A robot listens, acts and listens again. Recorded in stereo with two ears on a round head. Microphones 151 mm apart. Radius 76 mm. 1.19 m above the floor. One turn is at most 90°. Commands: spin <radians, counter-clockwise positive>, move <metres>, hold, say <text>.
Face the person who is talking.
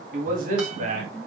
spin -0.79
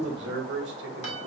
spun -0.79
spin -1.31
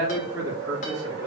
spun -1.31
spin -0.35
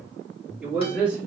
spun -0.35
spin -0.17
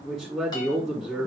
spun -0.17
say Facing the man speaking.